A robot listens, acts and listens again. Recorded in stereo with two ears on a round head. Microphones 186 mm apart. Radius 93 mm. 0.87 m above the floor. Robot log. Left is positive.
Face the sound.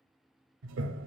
note: The toilet flushing: about 60° right or 120° right.
cmd yaw -60
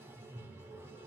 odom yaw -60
note: So it is at 10° right.
cmd yaw -10
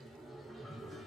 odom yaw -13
end: Facing the toilet flushing, under 1 m away.